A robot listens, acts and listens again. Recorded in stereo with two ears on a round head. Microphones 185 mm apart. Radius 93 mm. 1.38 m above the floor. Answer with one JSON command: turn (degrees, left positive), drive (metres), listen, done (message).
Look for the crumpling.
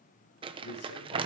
{"turn": -25}
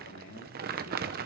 {"turn": -130}
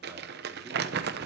{"turn": -50}
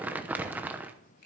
{"turn": -10}
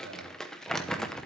{"done": "Facing the crumpling."}